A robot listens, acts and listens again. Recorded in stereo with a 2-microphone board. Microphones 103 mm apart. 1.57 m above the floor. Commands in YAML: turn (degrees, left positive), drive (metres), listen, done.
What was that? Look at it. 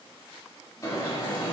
turn: 35
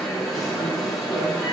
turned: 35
done: "Facing the alarm."